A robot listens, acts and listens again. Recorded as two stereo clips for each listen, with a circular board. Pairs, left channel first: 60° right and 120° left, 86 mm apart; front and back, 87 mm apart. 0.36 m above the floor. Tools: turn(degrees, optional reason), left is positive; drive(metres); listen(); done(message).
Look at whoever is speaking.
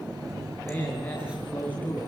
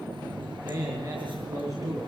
turn(degrees=-130, reason="The man speaking: 130° right.")
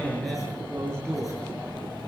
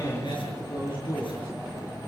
turn(degrees=20, reason="The man speaking is now 20° left.")
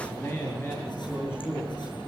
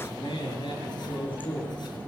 done("Found it: a man speaking, straight ahead, over 4 m away.")